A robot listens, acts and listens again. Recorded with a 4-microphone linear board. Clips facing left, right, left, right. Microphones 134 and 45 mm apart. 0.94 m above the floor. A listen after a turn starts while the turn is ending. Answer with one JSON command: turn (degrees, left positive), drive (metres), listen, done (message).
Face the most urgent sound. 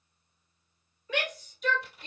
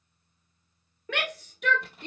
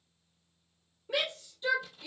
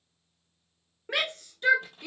{"turn": -70}
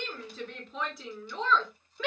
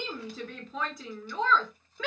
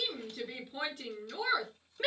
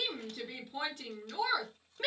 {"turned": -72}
{"done": "Found it: a shout, straight ahead."}